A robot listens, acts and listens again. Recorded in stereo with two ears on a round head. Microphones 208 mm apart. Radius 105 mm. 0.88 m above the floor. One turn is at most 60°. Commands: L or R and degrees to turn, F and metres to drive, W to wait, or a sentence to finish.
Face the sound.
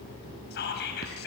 L50
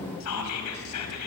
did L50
L60
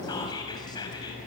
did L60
L20
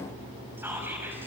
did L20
W
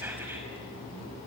I heard whispering from this way, but can't make it out now.